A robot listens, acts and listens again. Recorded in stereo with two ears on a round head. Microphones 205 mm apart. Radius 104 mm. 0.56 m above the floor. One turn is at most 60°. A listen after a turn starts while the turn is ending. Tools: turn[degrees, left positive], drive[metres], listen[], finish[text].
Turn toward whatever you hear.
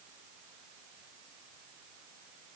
Action: listen[]
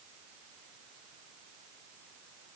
Action: listen[]
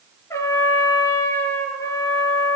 Action: turn[30]
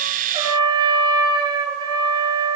Thought: So it is at 20° right.
Action: turn[-20]
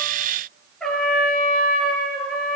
Action: finish[Found it: a trumpet, straight ahead.]